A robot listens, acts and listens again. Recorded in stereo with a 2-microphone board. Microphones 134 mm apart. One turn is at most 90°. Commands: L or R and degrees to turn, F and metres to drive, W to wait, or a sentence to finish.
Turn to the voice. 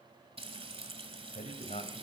L60
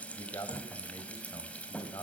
L30
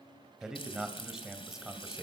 Found it: a man speaking, straight ahead.